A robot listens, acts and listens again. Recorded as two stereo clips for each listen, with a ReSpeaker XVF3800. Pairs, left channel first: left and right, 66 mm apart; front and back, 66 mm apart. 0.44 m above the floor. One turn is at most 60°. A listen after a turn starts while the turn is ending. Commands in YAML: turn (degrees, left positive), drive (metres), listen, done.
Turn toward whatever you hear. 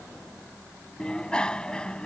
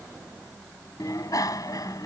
turn: 15
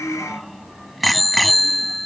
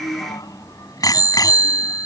done: "Facing the bicycle bell."